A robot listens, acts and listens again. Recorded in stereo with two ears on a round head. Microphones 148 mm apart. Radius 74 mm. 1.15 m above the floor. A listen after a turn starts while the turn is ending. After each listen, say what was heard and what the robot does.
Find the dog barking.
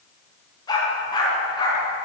The dog barking: about 25° left or 155° left. Turn 25° left.
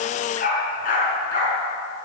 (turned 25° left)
So it is at 125° left. Turn 125° left.
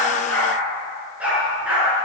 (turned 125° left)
The dog barking is now 10° right. Turn 10° right.
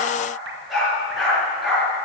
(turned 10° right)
Found it: a dog barking, straight ahead.